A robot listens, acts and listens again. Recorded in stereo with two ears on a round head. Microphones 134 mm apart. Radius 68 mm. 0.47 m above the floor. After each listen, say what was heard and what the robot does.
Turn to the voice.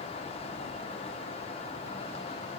Keep listening.
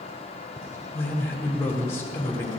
The man speaking: about 20° left or 160° left. Turn 20° left.
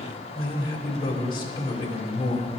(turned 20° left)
So it is at 140° left. Turn 140° left.
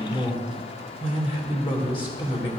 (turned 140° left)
The man speaking is now 40° left. Turn 40° left.
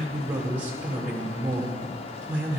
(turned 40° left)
The man speaking is now 15° right. Turn 15° right.
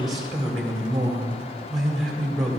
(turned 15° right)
Found it: a man speaking, straight ahead.